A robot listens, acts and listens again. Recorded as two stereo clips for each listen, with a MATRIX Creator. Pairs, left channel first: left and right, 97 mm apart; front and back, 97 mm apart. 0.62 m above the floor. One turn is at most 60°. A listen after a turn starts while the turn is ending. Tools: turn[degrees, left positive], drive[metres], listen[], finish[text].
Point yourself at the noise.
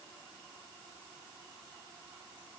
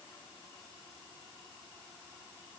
Action: listen[]
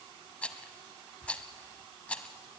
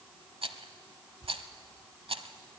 Thought: The rattle: 165° left.
Action: turn[60]
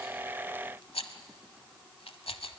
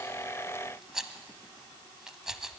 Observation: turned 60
Thought: The rattle is now 95° left.
Action: turn[60]
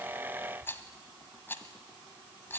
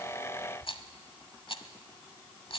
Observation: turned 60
Thought: The rattle is now 25° left.
Action: turn[25]
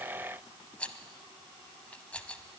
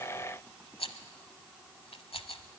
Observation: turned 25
Thought: The rattle is now 15° left.
Action: turn[15]
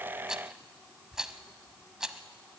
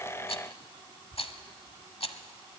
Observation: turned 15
Action: finish[Facing the rattle, 1 to 2 m away.]